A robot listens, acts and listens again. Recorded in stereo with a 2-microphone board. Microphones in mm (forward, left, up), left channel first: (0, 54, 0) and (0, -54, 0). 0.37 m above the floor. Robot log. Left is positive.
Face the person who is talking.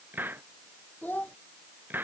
note: The child speaking: about 15° left or 165° left.
cmd yaw +15
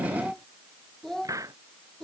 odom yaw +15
end: Facing the child speaking.